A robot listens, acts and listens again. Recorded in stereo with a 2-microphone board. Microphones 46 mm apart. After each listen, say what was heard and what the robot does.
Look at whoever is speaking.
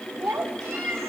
Turn 90° right.
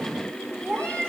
Facing the child speaking.